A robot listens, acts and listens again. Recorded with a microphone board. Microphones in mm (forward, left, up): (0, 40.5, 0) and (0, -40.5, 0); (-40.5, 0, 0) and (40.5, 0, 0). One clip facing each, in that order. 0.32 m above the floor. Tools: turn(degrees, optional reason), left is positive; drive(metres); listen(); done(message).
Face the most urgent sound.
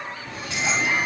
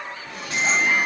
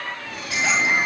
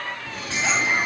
turn(degrees=-135, reason="The alarm: 135° right.")
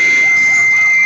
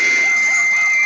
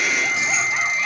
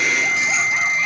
turn(degrees=20, reason="The alarm is now 20° left.")
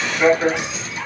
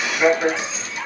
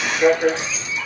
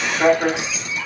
done("Facing the alarm.")